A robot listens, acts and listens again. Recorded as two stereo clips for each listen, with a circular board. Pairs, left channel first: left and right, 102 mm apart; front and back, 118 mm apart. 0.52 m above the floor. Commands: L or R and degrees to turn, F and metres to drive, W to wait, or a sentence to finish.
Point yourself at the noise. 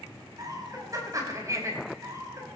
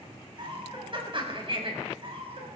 R150
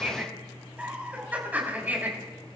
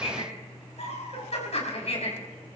R20
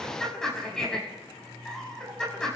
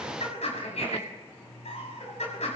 Found it: laughter, straight ahead.